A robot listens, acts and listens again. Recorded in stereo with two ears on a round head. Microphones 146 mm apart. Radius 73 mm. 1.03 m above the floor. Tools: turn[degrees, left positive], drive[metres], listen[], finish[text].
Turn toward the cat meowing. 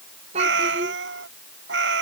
Action: turn[-90]
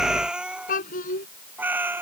Thought: So it is at 15° right.
Action: turn[-15]
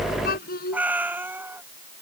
Thought: The cat meowing is now 15° right.
Action: turn[-15]
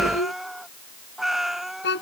Action: finish[Facing the cat meowing.]